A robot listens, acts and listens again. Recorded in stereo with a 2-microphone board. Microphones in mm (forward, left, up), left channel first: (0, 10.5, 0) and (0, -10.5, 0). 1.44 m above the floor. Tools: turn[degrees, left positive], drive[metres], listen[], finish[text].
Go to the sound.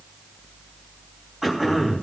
Action: turn[-30]
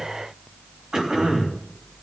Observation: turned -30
Thought: So it is at 140° right.
Action: turn[-140]
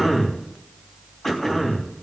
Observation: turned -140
Thought: The throat clearing is now 20° left.
Action: turn[20]
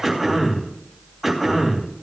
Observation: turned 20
Action: drive[1.0]
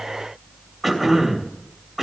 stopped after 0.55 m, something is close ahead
Action: finish[Blocked. The throat clearing is further on, straight ahead.]